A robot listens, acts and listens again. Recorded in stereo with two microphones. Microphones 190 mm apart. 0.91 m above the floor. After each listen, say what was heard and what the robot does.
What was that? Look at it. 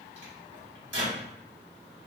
Turn 90° right.
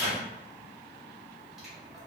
Found it: a microwave, straight ahead, 2 to 4 m away.